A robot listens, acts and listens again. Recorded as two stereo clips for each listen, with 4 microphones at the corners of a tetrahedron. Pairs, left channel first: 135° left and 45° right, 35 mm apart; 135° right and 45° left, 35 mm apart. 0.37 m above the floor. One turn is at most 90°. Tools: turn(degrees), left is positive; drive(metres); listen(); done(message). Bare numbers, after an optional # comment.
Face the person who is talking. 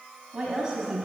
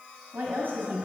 # The woman speaking: 20° left.
turn(20)
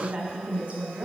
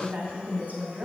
done("Found it: a woman speaking, straight ahead, 2 to 4 m away.")